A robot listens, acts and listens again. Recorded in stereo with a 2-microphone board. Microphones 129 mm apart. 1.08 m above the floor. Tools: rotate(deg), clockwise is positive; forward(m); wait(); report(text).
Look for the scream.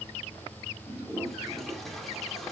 wait()
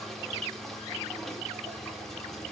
wait()
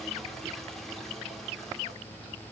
report("I can't make out a scream to turn to.")